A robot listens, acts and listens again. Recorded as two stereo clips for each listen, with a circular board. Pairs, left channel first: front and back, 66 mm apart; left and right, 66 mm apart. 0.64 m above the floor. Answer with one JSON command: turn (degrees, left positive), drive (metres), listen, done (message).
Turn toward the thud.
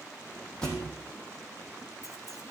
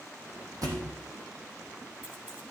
{"turn": -80}
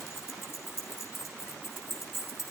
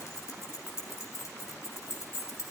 {"done": "Facing where the thud came from. I can't hear it now."}